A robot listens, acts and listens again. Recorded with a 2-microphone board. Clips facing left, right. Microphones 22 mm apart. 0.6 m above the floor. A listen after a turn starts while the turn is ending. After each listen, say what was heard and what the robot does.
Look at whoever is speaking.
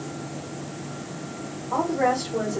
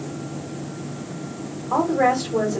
The woman speaking: about 65° right or 115° right. Turn 65° right.
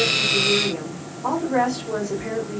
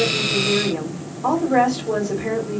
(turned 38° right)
So it is at 60° right. Turn 60° right.
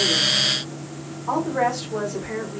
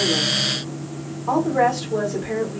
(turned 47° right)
The woman speaking is now 15° right. Turn 15° right.
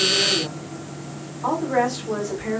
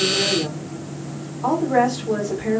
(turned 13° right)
Facing the woman speaking, 1 to 2 m away.